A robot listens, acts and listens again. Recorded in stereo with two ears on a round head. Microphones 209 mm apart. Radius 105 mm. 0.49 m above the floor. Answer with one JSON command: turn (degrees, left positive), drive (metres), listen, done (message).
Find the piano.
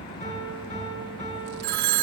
{"turn": 30}
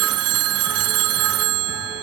{"listen": true}
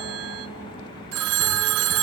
{"listen": true}
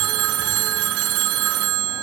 {"done": "I heard a piano, but can't make it out now. It was about straight ahead or 120° left."}